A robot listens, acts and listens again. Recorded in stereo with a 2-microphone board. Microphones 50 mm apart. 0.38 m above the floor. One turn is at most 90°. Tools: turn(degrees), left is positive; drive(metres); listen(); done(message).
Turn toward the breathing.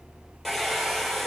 listen()
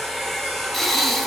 turn(degrees=30)
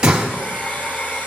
turn(degrees=-20)
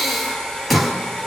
done("Found it: breathing, straight ahead.")